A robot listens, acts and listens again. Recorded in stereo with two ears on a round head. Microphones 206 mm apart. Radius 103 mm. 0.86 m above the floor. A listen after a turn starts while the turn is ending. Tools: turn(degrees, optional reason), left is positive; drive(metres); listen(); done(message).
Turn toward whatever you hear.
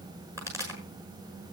turn(degrees=-30)
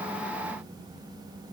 listen()
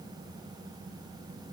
done("I heard a pop, but can't make it out now. It was about 15° left or 135° right.")